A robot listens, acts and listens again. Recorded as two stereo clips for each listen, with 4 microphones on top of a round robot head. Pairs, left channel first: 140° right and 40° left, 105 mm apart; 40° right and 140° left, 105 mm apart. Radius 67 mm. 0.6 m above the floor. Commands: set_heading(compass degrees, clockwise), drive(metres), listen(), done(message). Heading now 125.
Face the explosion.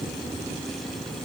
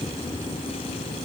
listen()
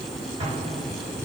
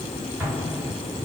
set_heading(50)
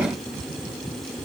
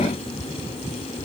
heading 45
done("Facing where the explosion came from. I can't hear it now.")